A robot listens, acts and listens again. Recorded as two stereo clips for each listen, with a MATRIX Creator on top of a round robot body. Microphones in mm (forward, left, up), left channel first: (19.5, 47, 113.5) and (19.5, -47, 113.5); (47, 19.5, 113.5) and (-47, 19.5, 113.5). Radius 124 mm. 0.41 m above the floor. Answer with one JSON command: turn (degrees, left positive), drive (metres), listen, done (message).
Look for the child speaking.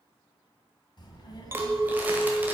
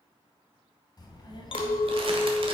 {"turn": 45}
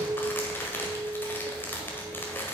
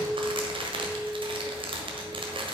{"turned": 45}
{"listen": true}
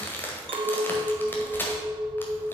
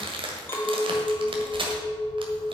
{"listen": true}
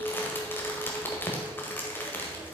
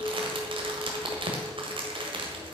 {"turn": -15}
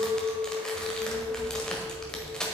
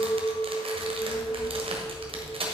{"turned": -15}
{"done": "Facing the child speaking."}